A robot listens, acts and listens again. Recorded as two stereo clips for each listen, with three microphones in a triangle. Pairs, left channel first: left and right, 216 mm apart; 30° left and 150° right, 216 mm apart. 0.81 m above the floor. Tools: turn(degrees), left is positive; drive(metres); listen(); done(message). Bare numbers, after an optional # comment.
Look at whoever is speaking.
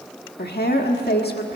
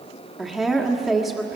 # The woman speaking: 120° left.
turn(120)
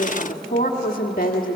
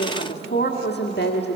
# The woman speaking is now 50° left.
turn(50)
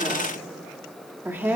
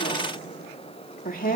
# The woman speaking is now 10° right.
turn(-10)
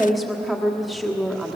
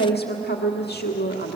done("Found it: a woman speaking, straight ahead.")